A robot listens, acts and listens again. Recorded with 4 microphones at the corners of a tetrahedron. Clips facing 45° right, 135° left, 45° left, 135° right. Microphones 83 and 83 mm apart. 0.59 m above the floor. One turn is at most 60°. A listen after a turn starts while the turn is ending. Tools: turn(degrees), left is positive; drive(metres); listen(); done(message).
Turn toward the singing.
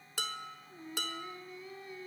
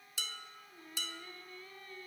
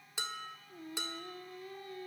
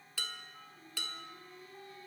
turn(degrees=30)
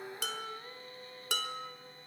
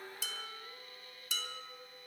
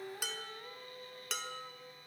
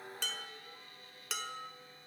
turn(degrees=10)
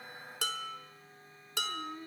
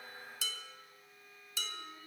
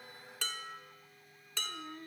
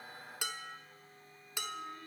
done("Facing the singing, under 1 m away.")